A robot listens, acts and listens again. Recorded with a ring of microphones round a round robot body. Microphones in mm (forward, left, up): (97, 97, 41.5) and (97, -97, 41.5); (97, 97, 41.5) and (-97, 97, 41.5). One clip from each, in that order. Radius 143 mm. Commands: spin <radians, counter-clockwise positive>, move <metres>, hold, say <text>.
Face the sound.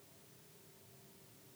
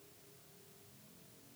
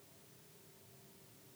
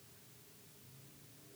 hold
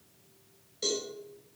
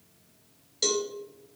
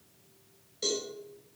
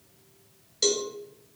spin -2.36
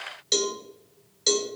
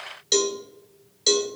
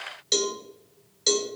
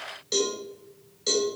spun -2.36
spin -0.26
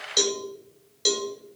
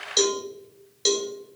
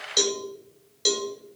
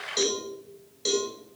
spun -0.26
say Found it: a cowbell, straight ahead.